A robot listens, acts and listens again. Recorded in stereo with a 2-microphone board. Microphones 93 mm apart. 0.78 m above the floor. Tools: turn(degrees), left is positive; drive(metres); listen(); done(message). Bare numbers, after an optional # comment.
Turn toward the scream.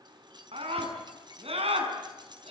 turn(-90)
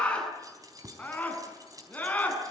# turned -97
# So it is at 15° left.
turn(15)
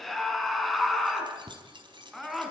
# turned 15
done("Found it: a scream, straight ahead.")